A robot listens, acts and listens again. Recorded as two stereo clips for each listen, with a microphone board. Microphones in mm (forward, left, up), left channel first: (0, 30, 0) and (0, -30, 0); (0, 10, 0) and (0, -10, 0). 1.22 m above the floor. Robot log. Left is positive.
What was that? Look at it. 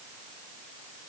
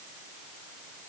cmd idle
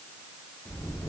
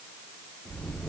cmd yaw +90
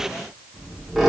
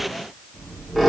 end: Found it: a squeak, straight ahead.